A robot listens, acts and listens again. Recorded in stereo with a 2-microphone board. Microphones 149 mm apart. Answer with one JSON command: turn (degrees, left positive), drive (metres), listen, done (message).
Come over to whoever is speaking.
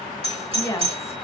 {"turn": 20}
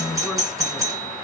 {"listen": true}
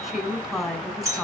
{"drive": 1.0}
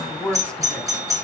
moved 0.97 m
{"drive": 1.0}
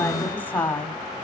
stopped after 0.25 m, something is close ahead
{"turn": 15}
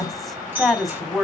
{"done": "I am next to the woman speaking."}